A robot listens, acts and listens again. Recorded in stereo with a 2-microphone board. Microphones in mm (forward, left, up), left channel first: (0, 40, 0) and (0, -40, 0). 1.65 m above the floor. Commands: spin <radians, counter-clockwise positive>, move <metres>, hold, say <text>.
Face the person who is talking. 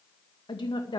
spin 1.31
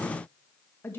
spin 0.52
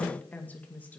spin 0.35
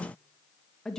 say Found it: a woman speaking, straight ahead, 2 to 4 m away.